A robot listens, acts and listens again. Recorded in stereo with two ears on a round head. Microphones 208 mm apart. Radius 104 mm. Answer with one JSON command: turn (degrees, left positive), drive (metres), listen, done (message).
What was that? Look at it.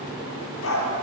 {"turn": 65}
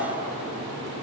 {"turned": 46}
{"listen": true}
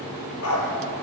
{"turn": 70}
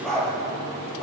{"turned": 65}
{"done": "Found it: a dog barking, straight ahead."}